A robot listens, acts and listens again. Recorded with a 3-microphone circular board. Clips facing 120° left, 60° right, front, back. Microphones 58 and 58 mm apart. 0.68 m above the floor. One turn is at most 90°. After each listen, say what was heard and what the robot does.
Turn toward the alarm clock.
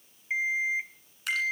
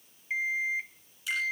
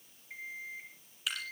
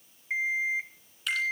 The alarm clock: 165° right. Turn 90° right.
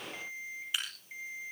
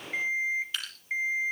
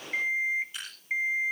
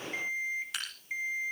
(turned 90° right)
The alarm clock is now 55° right. Turn 55° right.
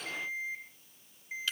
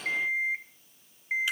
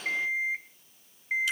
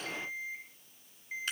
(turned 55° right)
The alarm clock is now 25° right. Turn 25° right.
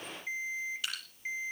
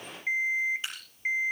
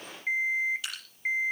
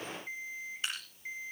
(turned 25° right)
The alarm clock is now 15° right. Turn 15° right.
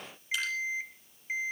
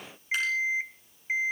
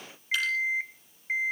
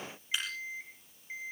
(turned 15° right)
Facing the alarm clock.